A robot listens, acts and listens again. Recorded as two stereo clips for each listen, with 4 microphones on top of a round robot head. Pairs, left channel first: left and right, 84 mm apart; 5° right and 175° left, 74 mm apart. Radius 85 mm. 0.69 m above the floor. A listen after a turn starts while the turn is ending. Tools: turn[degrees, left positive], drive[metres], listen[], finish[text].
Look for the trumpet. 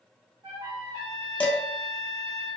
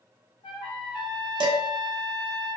Thought: The trumpet: 40° right.
Action: turn[-40]
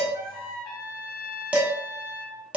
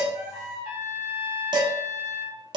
Thought: The trumpet is now 10° right.
Action: turn[-10]
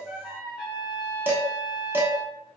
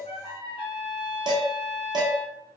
Action: finish[Facing the trumpet.]